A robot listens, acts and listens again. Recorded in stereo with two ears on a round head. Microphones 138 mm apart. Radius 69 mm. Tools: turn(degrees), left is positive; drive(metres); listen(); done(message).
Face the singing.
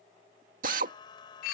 turn(degrees=30)
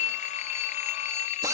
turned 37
listen()
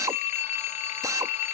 listen()
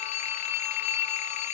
done("I heard singing, but can't make it out now. It was about 5° right or 115° left.")